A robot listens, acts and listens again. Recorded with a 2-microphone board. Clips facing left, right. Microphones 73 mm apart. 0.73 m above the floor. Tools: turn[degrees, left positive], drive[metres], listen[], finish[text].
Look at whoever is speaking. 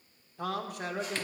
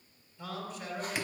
Thought: The man speaking: about 70° left or 110° left.
Action: turn[70]
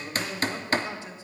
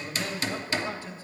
Thought: So it is at 20° left.
Action: turn[20]
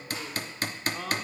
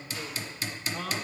Action: finish[Found it: a man speaking, straight ahead.]